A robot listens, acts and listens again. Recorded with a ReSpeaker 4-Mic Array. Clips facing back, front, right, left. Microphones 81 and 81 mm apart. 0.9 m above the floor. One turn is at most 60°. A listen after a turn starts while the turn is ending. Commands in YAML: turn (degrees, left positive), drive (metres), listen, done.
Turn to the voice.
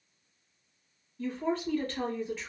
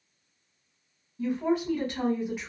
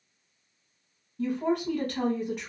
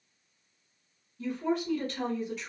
turn: -60
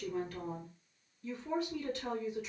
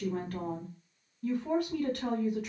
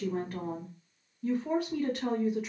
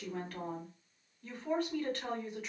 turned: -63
done: "Found it: a woman speaking, straight ahead, 1 to 2 m away."